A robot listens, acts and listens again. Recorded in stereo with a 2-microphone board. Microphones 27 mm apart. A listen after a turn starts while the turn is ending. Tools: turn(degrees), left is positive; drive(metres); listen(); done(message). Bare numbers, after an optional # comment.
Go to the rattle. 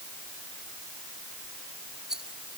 # The rattle: about 25° right or 155° right.
turn(-25)
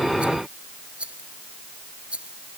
# So it is at 130° right.
turn(-130)
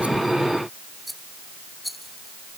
drive(1.0)
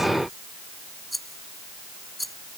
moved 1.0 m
drive(1.0)
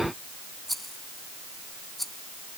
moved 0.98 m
# The rattle is now 10° left.
turn(10)
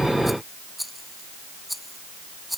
drive(1.0)
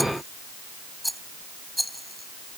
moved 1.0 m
drive(1.0)
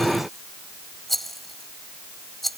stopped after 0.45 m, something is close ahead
# The rattle is now 10° left.
turn(10)
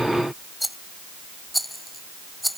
done("Arrived at the rattle, straight ahead.")